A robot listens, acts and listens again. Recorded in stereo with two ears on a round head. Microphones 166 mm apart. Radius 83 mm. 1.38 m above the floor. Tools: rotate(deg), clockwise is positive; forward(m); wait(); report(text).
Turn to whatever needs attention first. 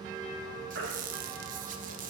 rotate(65)
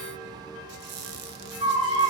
rotate(20)
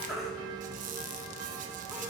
report("Found it: a baby crying, straight ahead.")